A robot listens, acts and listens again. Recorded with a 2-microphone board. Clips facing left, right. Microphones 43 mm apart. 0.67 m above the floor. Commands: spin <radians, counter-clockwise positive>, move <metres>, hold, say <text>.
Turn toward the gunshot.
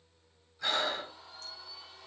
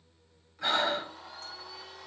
hold
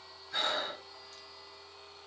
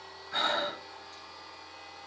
hold
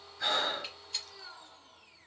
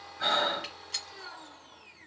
spin -1.13
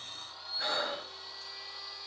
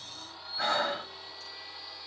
hold
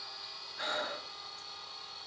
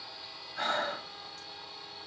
say I heard a gunshot, but can't make it out now. It was about straight ahead or 50° right.